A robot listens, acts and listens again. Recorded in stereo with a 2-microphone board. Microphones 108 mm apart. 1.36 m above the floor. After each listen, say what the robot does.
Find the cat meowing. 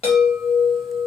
Keep listening.
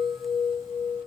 Keep listening.
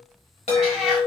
Turn 30° right.
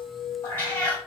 Turn 25° left.
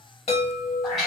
Facing the cat meowing, 1 to 2 m away.